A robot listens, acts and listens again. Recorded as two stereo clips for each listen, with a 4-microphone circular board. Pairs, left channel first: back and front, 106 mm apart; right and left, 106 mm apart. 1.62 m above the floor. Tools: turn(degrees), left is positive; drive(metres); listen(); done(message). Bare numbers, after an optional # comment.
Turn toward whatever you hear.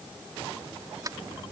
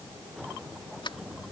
# The sliding door: 55° right.
turn(-55)
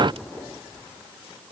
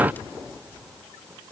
listen()
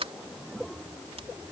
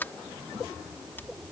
# The sliding door is now 20° right.
turn(-20)
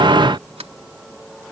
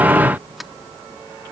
done("Found it: a sliding door, straight ahead.")